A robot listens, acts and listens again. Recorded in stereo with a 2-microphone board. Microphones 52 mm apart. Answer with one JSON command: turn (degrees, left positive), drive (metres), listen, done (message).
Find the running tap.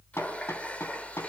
{"turn": 25}
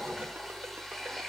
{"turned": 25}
{"done": "Facing the running tap, 2 to 4 m away."}